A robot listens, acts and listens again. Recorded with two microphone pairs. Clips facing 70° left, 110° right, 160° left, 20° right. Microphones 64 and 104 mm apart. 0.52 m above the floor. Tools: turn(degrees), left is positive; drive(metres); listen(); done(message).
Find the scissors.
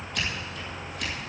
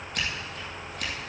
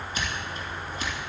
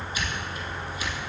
turn(degrees=-155)
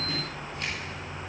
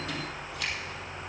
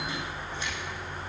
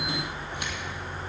listen()
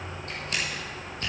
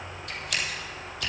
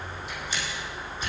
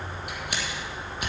turn(degrees=10)
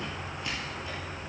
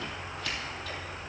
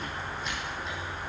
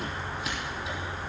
listen()
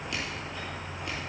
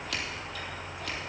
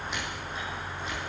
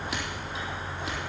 listen()
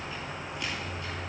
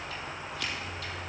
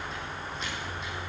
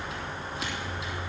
done("I heard scissors from this way, but can't make it out now.")